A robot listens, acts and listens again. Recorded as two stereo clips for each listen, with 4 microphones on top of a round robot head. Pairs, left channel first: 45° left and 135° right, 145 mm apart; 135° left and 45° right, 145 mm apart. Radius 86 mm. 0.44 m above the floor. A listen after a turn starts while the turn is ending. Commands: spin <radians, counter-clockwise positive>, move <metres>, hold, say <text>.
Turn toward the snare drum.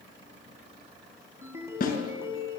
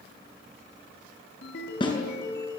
spin 1.31
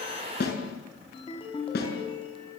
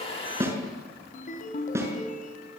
spin 0.52
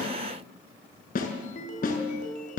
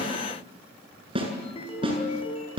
spin 0.26
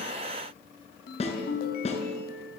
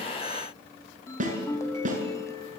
say Facing the snare drum, over 4 m away.